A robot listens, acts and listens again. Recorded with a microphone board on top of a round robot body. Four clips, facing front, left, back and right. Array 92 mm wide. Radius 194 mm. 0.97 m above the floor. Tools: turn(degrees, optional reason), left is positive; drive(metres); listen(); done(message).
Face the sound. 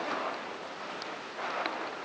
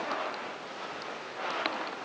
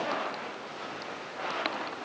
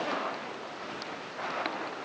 listen()
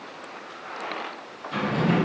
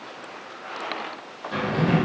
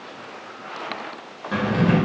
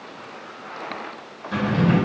turn(degrees=-175, reason="The drawer: 175° right.")
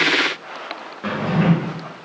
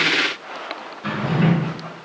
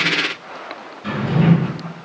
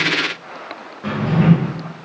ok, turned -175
turn(degrees=-25, reason="The drawer is now 25° right.")
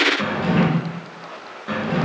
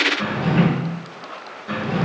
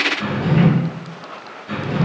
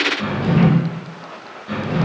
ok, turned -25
turn(degrees=10, reason="The drawer is now 10° left.")
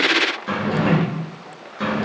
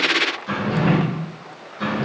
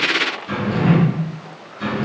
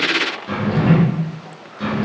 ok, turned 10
done("Found it: a drawer, straight ahead, 2 to 4 m away.")